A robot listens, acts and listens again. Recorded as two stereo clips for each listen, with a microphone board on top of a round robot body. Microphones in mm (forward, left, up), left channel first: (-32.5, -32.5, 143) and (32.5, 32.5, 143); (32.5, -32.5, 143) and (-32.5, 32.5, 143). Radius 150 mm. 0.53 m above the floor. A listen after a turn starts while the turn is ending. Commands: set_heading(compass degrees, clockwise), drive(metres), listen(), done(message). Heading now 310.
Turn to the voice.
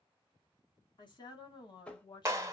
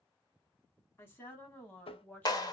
set_heading(60)
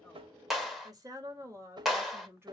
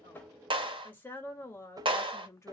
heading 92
done("Found it: a woman speaking, straight ahead, 1 to 2 m away.")